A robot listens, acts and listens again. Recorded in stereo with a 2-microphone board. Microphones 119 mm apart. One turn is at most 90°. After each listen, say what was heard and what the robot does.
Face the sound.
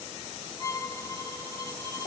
The violin: about 35° right or 145° right. Turn 35° right.
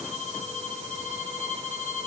So it is at 105° right. Turn 90° right.
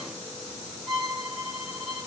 Facing the violin.